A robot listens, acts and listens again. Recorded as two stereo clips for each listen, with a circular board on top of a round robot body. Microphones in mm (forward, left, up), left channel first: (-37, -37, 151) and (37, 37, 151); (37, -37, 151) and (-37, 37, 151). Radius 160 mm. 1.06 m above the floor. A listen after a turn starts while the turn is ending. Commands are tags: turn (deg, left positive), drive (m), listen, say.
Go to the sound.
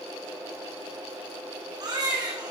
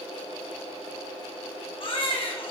<drive m="1.0"/>
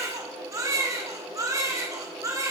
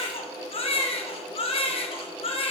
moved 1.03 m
<turn deg="-15"/>
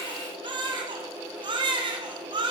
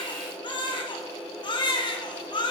<drive m="1.0"/>
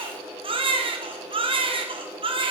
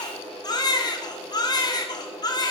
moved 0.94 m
<drive m="1.0"/>
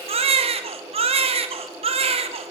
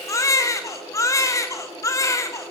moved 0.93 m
<turn deg="15"/>
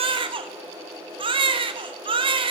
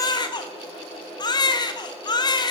<drive m="1.0"/>
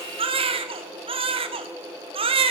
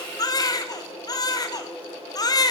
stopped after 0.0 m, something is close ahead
<turn deg="10"/>
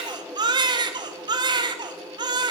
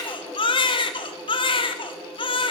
<say>Arrived at the baby crying, straight ahead.</say>